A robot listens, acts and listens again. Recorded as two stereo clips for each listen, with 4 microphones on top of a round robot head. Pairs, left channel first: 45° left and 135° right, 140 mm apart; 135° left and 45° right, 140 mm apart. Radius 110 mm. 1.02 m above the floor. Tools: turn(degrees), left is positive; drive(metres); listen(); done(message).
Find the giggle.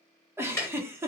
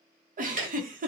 turn(degrees=-65)
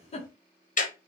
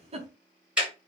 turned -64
done("Facing the giggle, under 1 m away.")